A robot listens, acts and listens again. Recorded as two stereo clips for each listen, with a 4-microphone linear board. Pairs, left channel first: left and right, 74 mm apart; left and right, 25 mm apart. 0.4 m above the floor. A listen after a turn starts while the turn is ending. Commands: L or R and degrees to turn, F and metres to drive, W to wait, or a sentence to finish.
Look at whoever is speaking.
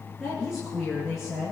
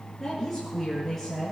R30
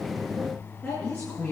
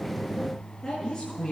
L25
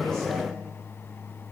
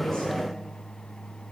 W
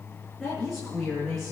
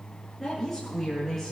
Facing the woman speaking, over 4 m away.